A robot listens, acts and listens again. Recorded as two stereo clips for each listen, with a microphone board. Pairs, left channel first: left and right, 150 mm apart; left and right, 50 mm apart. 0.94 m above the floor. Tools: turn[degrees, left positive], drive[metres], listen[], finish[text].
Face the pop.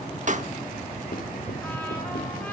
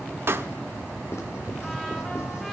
Thought: The pop: about 55° right or 125° right.
Action: turn[-55]
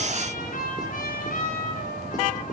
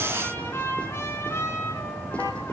Action: listen[]
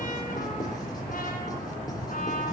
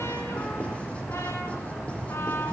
Action: finish[I heard a pop, but can't make it out now. It was about straight ahead or 70° right.]